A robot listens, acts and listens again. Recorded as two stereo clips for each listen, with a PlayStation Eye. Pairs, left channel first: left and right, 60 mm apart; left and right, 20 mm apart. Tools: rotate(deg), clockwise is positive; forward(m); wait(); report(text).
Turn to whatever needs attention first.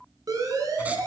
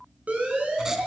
rotate(70)
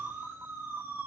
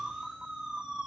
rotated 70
rotate(35)
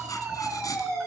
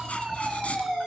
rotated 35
rotate(10)
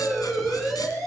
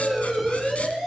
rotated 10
report("Found it: a siren, straight ahead, over 4 m away.")